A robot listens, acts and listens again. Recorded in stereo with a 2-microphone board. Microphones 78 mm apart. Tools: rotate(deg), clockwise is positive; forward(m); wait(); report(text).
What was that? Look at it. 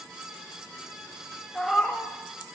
rotate(-30)
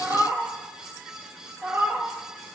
rotate(25)
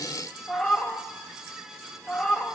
rotate(-15)
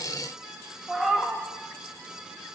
report("Found it: a cat meowing, straight ahead.")